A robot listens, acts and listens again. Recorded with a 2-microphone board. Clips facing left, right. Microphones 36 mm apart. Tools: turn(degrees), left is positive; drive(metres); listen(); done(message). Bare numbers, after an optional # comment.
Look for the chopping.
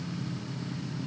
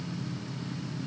listen()
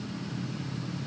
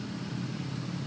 listen()
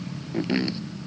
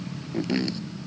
# The chopping: about 15° left or 165° left.
turn(15)
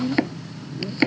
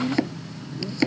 # So it is at 150° left.
turn(150)
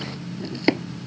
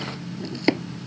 done("Found it: chopping, straight ahead.")